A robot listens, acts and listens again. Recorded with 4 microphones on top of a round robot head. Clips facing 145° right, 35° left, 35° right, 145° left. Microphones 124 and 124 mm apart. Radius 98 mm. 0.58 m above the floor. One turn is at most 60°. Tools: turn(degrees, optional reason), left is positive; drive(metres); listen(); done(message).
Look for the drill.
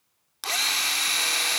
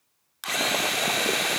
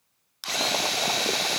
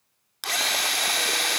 turn(degrees=60, reason="The drill: 165° left.")
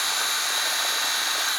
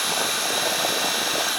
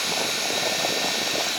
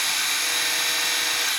turn(degrees=60, reason="The drill is now 120° left.")
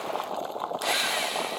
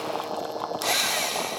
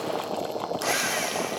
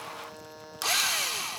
turn(degrees=60, reason="The drill is now 80° left.")
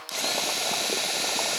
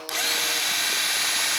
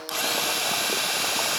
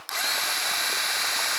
turn(degrees=40, reason="The drill is now 40° left.")
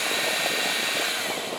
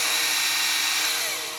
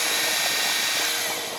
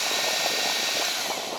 turn(degrees=-10, reason="The drill is now 10° right.")
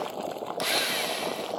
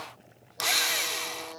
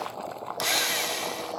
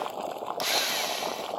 done("Found it: a drill, straight ahead.")